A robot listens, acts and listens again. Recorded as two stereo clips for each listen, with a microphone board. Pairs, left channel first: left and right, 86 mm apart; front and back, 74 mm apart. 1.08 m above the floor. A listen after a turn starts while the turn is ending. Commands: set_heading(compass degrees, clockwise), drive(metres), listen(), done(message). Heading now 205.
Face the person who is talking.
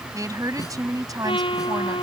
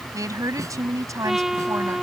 set_heading(340)
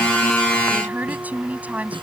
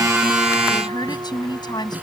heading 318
set_heading(333)
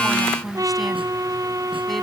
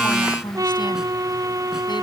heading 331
done("Facing the woman speaking.")